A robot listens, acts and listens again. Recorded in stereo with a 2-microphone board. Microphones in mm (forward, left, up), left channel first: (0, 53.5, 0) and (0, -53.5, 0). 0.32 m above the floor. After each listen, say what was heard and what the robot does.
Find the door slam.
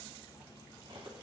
Keep listening.
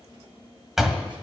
Turn 30° right.
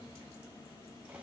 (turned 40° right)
Keep listening.
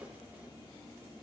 I heard a door slam, but can't make it out now. It was about 35° left or 135° right.